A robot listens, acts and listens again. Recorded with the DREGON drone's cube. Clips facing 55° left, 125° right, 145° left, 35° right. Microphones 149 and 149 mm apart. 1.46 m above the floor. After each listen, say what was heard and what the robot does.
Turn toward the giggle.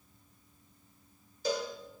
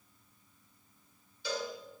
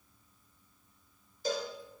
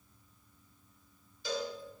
Keep listening.
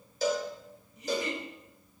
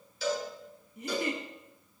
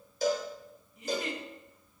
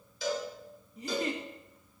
The giggle: 85° right. Turn 85° right.
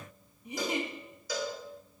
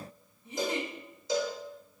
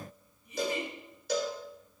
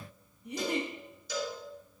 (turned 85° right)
The giggle is now 15° right. Turn 15° right.
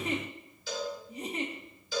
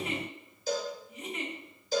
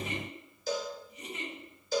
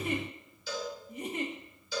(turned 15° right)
Found it: a giggle, straight ahead.